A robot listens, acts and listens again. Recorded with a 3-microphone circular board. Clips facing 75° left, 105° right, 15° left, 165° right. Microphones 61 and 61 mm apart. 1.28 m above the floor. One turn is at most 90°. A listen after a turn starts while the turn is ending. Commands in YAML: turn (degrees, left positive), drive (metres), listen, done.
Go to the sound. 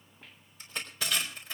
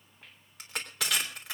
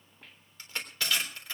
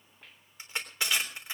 turn: -90
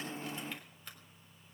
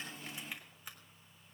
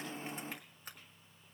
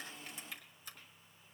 listen: true
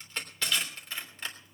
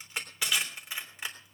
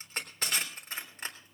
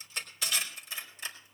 turn: -30
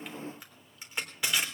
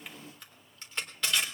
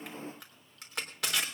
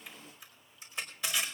drive: 1.0
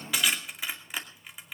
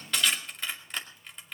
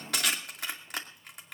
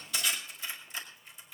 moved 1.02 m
drive: 1.0
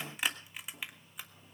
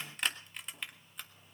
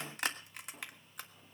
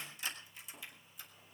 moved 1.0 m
turn: -10
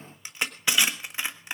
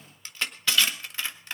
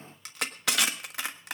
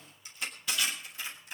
drive: 1.0
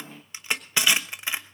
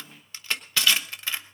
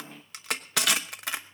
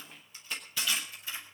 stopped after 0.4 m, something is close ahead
done: "I am next to the crushing."